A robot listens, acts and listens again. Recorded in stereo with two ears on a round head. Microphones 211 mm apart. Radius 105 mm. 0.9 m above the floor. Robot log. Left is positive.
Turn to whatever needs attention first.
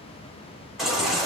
cmd yaw +30
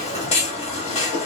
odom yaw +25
note: So it is at 155° left.
cmd yaw +155
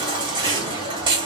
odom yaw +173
note: The baby crying is now 20° right.
cmd yaw -20
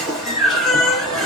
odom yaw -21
end: Facing the baby crying.